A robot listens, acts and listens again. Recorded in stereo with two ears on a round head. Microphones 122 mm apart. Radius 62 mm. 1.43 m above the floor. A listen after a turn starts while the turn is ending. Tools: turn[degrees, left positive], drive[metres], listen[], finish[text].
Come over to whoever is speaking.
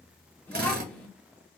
Action: turn[30]
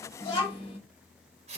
Thought: So it is at 135° left.
Action: turn[135]
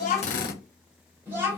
Thought: The child speaking is now 20° right.
Action: turn[-20]
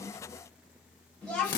Action: drive[1.0]
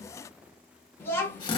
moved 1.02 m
Thought: The child speaking is now 15° left.
Action: turn[15]
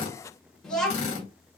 Action: drive[1.0]
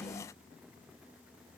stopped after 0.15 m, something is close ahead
Action: finish[I am next to the child speaking.]